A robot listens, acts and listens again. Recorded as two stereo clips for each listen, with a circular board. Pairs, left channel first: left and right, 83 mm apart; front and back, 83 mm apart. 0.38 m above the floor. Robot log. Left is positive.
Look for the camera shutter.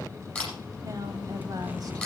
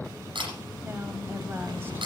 note: The camera shutter: 170° left.
cmd yaw +170
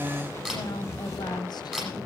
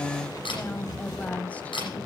end: Found it: a camera shutter, straight ahead.